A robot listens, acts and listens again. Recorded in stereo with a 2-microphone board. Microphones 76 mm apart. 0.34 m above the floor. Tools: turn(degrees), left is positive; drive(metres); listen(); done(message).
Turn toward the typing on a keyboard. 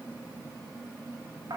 listen()
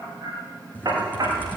turn(degrees=20)
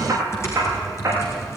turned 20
turn(degrees=145)
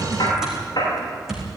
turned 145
done("Found it: typing on a keyboard, straight ahead.")